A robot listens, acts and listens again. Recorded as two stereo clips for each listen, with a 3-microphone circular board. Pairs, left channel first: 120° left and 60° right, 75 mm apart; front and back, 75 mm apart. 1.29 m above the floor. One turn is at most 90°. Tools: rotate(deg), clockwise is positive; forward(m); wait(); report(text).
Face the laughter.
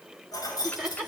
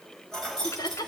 rotate(-20)
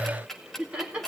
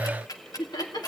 rotate(-15)
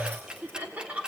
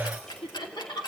rotate(-10)
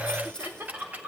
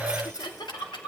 rotate(-10)
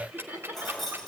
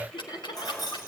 report("Facing the laughter.")